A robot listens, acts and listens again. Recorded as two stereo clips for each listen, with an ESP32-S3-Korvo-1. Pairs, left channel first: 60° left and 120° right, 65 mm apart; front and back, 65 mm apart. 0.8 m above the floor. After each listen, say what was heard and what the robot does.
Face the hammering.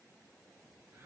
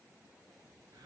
Keep listening.
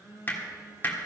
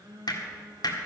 Found it: hammering, straight ahead, 1 to 2 m away.